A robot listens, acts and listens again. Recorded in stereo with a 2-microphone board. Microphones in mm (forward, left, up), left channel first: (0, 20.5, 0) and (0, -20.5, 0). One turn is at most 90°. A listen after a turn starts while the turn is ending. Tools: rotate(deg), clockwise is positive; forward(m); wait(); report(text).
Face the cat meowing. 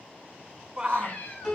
rotate(-35)
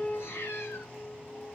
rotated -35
rotate(-90)
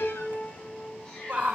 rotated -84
rotate(-25)
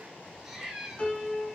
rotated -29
report("Found it: a cat meowing, straight ahead, over 4 m away.")